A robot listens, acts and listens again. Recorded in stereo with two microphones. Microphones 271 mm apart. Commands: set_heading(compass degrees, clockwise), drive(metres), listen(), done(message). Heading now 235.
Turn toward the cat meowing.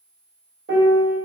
listen()
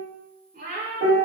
set_heading(275)
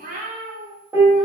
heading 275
set_heading(300)
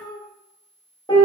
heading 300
set_heading(290)
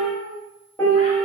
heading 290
set_heading(265)
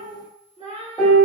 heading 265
set_heading(240)
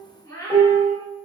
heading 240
set_heading(230)
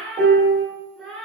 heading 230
done("Found it: a cat meowing, straight ahead, 1 to 2 m away.")